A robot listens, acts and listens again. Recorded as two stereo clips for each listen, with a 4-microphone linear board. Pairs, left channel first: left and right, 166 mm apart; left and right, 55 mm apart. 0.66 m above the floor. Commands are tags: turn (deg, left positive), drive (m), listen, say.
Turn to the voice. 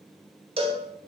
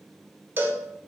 <listen/>
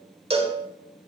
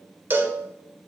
<listen/>
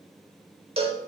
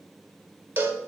<say>I can't make out anyone speaking to turn to.</say>